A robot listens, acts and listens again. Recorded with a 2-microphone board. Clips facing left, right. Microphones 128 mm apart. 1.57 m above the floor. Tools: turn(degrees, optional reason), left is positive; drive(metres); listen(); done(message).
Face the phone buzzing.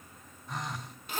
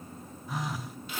turn(degrees=-30)
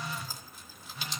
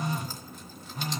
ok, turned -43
turn(degrees=-135, reason="So it is at 135° right.")
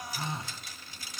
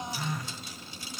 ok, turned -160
turn(degrees=25, reason="The phone buzzing is now 25° left.")
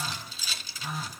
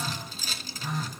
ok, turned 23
done("Facing the phone buzzing, under 1 m away.")